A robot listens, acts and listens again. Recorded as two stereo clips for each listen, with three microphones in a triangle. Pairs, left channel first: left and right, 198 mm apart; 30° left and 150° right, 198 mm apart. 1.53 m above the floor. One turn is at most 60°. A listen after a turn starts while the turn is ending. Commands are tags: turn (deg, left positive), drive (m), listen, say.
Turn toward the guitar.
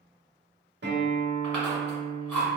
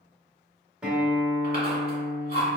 <turn deg="-60"/>
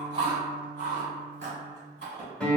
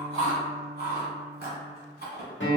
<say>Found it: a guitar, straight ahead, under 1 m away.</say>